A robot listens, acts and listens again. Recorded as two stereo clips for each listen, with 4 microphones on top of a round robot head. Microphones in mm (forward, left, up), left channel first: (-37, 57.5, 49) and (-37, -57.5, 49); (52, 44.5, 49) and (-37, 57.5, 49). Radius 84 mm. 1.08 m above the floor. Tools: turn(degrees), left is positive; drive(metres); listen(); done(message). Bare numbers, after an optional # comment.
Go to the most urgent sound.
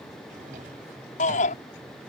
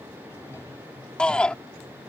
# The shout: 70° left.
turn(70)
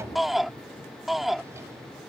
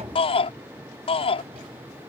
drive(1.0)
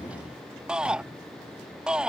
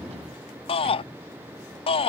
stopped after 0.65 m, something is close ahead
done("Something is in my way. I am facing the shout but have not reached it.")